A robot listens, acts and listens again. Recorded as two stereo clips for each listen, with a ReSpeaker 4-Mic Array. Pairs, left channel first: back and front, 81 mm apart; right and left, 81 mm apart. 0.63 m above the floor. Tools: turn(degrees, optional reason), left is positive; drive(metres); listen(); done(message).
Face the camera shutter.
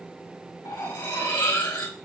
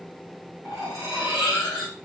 listen()
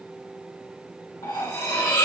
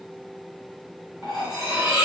listen()
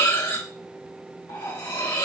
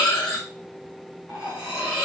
done("I can't make out a camera shutter to turn to.")